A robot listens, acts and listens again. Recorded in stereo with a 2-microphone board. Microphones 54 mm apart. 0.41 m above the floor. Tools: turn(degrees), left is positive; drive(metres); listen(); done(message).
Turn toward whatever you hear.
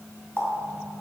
turn(degrees=20)
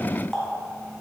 done("Found it: a running tap, straight ahead, 2 to 4 m away.")